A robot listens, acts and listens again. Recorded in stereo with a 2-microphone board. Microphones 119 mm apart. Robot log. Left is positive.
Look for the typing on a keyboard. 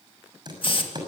note: The typing on a keyboard: about 35° right or 145° right.
cmd yaw -35
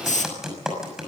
end: Facing the typing on a keyboard.